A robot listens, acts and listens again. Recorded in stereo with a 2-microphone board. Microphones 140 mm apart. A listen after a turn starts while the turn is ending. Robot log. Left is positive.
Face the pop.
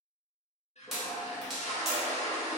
cmd yaw +30
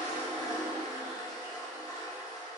cmd idle
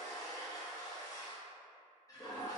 end: I heard a pop, but can't make it out now. It was about 30° right or 150° left.